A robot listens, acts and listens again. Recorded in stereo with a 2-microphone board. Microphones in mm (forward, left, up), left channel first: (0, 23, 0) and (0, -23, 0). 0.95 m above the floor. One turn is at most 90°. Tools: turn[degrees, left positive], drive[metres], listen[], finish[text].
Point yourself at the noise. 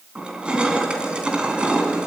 Thought: The crushing: about 20° right or 160° right.
Action: turn[-20]
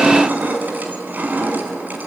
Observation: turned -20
Thought: So it is at 140° right.
Action: turn[-90]
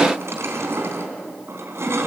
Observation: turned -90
Thought: The crushing is now 70° right.
Action: turn[-70]
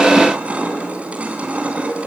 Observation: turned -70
Thought: The crushing is now 30° right.
Action: turn[-30]
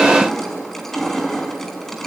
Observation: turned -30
Action: finish[Facing the crushing.]